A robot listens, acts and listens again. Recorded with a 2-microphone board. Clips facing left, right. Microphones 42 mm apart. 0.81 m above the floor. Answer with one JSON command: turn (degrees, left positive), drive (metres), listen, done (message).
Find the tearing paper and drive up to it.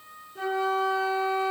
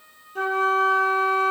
{"listen": true}
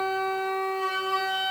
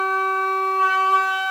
{"listen": true}
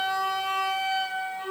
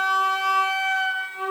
{"done": "I can't make out tearing paper to turn to."}